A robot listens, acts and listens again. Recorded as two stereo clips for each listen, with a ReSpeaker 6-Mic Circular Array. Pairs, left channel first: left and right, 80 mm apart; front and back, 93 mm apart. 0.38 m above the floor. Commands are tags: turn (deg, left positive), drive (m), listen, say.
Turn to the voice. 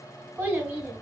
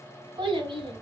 <turn deg="-155"/>
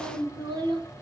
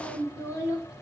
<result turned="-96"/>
<turn deg="-60"/>
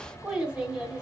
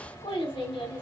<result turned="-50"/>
<turn deg="-10"/>
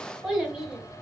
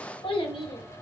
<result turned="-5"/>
<say>Found it: a child speaking, straight ahead, 1 to 2 m away.</say>